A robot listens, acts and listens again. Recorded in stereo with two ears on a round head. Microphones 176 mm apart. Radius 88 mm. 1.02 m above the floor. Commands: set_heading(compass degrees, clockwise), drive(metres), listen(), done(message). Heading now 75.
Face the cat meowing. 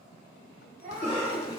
set_heading(115)
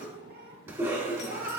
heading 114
set_heading(244)
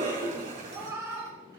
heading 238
set_heading(253)
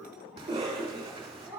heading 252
set_heading(267)
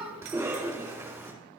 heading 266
done("Found it: a cat meowing, straight ahead.")